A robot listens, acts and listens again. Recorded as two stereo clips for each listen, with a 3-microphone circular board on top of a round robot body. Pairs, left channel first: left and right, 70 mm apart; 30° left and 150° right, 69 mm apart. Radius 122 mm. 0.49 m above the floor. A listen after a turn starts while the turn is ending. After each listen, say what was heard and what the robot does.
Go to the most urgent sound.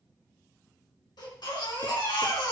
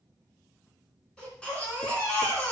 The baby crying: 110° left. Turn 110° left.
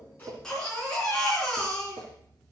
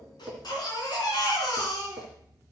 Drive 1.0 m forward.
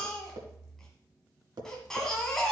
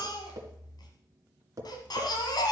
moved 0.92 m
Drive 1.0 m forward.
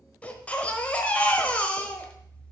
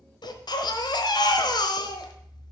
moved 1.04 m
The baby crying is now 15° left. Turn 15° left.
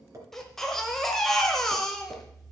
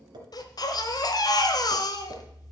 Drive 1.0 m forward.
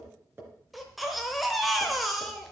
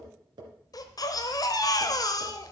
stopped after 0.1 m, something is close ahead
Arrived at the baby crying, straight ahead.